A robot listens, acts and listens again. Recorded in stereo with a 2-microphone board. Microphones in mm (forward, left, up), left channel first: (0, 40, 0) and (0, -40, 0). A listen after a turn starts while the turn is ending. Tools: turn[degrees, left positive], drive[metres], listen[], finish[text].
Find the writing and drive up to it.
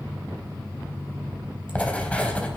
Thought: The writing: about 15° left or 165° left.
Action: turn[15]
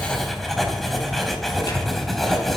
Action: drive[1.0]
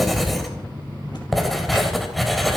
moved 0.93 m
Action: drive[1.0]
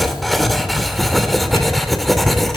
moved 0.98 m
Action: drive[1.0]
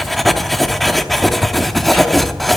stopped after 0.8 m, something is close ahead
Action: finish[I am next to the writing.]